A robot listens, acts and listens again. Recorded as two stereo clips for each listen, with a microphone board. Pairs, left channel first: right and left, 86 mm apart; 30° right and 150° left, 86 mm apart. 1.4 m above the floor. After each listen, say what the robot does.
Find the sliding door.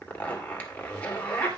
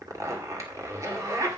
Keep listening.
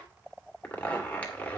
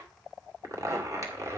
Keep listening.
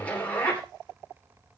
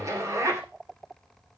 I can't make out a sliding door, only a zipper.